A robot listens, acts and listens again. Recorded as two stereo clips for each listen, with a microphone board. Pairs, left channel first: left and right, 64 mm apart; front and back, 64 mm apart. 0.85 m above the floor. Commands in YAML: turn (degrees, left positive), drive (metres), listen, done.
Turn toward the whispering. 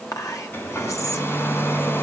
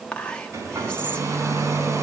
turn: 70
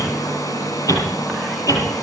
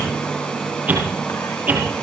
listen: true
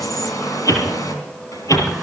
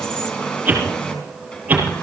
listen: true
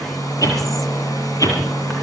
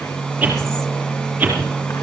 done: "I heard whispering from this way, but can't make it out now."